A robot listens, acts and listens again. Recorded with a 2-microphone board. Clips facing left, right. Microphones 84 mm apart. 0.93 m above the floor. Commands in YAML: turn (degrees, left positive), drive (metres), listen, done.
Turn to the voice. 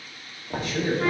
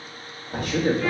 turn: -60
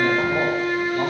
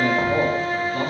turn: -50
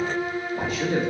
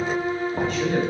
done: "Found it: a man speaking, straight ahead, 1 to 2 m away."